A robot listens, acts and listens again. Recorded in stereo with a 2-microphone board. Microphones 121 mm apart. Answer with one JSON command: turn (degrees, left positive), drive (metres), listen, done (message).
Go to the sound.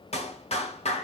{"turn": 65}
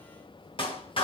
{"turn": 50}
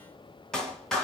{"drive": 1.0}
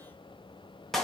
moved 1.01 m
{"drive": 1.0}
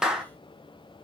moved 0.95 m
{"drive": 1.0}
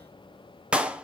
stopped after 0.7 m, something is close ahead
{"turn": -10}
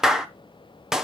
{"done": "Arrived at the clap, straight ahead."}